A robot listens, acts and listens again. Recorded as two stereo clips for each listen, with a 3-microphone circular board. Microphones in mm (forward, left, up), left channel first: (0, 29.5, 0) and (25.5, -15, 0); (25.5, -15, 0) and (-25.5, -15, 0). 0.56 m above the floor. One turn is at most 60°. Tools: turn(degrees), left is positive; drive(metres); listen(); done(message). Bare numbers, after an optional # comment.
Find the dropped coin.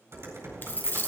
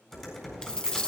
# The dropped coin: 75° left.
turn(60)
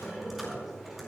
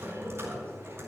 # Nothing new. It was at 15° left.
turn(15)
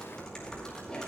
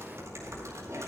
done("I heard a dropped coin from this way, but can't make it out now.")